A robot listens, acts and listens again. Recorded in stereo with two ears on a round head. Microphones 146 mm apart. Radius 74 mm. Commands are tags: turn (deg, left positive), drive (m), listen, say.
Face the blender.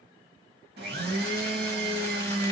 <turn deg="-65"/>
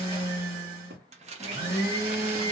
<turn deg="-20"/>
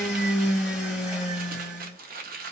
<say>Facing the blender, 1 to 2 m away.</say>